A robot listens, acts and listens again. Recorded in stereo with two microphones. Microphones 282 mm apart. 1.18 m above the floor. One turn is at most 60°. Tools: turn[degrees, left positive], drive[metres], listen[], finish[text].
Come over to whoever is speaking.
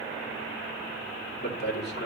Thought: The man speaking: about 35° left or 145° left.
Action: turn[35]
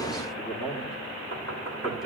Action: drive[1.0]
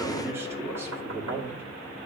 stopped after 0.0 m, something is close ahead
Thought: The man speaking is now 10° right.
Action: turn[-10]
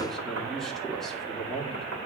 Action: finish[Something is in my way. I am facing the man speaking but have not reached it.]